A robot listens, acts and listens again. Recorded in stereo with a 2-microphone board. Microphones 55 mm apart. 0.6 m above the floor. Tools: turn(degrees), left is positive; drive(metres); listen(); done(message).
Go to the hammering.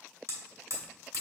turn(degrees=-60)
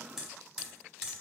drive(metres=1.0)
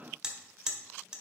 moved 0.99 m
turn(degrees=-15)
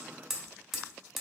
drive(metres=1.0)
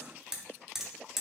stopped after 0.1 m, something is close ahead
done("I am next to the hammering.")